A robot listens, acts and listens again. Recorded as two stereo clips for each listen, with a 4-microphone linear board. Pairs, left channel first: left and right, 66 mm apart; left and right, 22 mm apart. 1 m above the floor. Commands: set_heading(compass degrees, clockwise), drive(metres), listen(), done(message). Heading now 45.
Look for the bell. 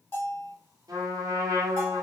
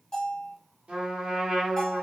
set_heading(5)
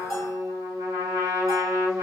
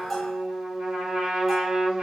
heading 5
listen()
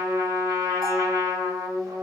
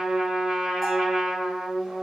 listen()
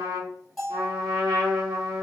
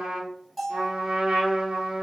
set_heading(355)
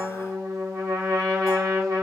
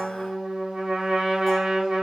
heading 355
listen()
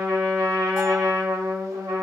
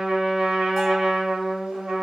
listen()
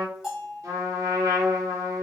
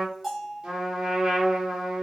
done("Found it: a bell, straight ahead.")